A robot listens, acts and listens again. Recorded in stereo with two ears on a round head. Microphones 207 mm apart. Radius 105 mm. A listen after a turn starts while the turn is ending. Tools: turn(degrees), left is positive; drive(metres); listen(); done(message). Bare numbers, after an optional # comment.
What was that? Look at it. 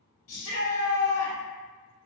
# The shout: about 65° left or 115° left.
turn(65)
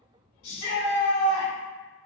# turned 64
# So it is at 55° left.
turn(55)
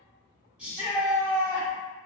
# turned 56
done("Facing the shout.")